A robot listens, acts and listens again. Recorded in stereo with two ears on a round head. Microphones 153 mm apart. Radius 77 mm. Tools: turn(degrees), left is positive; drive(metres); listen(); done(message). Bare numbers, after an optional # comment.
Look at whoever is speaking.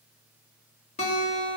listen()
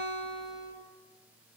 listen()
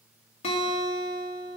done("I can't make out anyone speaking to turn to.")